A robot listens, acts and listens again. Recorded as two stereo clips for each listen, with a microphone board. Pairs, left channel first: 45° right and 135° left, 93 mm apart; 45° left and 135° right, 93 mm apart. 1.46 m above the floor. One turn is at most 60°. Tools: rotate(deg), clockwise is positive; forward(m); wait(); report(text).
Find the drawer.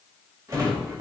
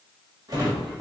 rotate(-60)
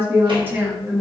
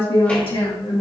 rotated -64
rotate(-60)
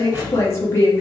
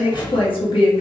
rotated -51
rotate(-60)
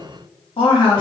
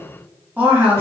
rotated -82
rotate(15)
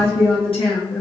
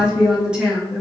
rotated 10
wait()
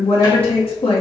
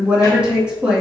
report("I heard a drawer from this way, but can't make it out now.")